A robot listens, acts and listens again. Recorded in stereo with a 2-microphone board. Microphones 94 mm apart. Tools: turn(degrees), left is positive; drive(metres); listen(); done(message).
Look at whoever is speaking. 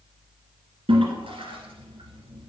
listen()
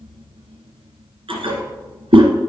listen()
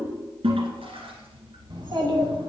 turn(degrees=-60)
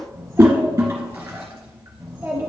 turn(degrees=-20)
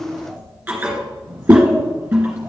done("Facing the child speaking, 2 to 4 m away.")